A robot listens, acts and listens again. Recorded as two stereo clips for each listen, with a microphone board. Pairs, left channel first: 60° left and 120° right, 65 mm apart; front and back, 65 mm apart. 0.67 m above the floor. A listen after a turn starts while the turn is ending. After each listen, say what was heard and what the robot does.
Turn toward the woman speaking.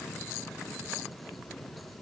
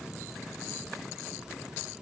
Keep listening.
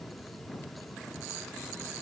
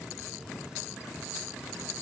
Keep listening.
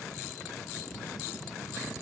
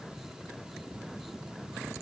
I can't make out a woman speaking.